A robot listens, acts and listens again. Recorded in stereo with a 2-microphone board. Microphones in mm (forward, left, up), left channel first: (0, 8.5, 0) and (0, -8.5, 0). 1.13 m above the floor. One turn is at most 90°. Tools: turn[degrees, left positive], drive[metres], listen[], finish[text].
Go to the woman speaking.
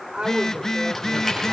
Action: turn[-90]
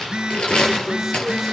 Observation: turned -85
Action: listen[]
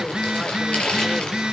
Action: listen[]
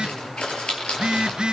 Action: finish[Facing where the woman speaking came from. I can't hear it now. I did not reach it.]